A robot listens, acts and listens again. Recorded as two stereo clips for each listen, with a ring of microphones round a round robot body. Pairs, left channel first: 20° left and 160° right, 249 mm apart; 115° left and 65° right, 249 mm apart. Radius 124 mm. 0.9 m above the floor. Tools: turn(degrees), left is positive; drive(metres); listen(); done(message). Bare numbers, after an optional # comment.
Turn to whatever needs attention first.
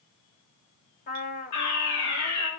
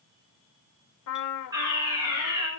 # The fire alarm: 10° left.
turn(10)
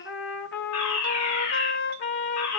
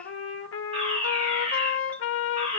done("Found it: a fire alarm, straight ahead.")